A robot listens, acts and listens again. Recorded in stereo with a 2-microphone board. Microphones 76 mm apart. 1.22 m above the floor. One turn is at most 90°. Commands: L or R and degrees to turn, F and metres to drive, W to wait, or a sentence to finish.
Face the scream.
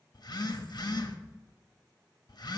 W
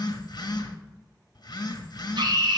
R90
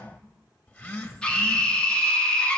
L15
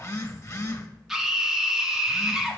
Facing the scream.